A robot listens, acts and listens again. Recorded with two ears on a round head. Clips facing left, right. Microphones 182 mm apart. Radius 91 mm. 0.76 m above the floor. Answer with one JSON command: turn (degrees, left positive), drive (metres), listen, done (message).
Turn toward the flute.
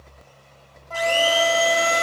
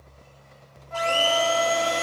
{"turn": 90}
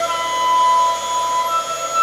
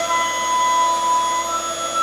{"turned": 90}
{"done": "Facing the flute."}